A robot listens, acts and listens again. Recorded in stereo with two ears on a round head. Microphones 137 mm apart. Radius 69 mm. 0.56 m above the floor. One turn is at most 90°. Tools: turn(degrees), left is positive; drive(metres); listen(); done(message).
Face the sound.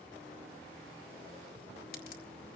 turn(degrees=65)
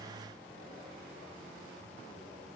listen()
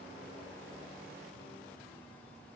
done("I heard a crack, but can't make it out now. It was about straight ahead or 50° left.")